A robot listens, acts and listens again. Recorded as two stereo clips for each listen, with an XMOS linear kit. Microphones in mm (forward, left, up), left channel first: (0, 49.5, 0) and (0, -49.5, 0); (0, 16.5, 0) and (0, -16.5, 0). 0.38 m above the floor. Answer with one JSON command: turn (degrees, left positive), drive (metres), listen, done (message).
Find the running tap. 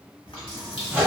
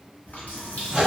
{"turn": 65}
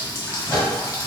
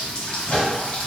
{"turn": 35}
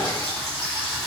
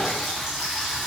{"done": "Facing the running tap."}